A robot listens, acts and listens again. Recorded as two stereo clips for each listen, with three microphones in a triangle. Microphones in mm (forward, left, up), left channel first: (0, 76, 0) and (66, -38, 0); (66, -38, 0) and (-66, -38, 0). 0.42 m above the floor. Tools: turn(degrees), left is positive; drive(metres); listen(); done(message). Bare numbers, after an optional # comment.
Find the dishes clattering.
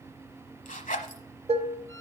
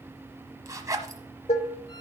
# The dishes clattering: 30° right.
turn(-30)
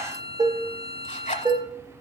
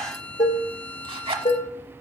done("Found it: dishes clattering, straight ahead, 1 to 2 m away.")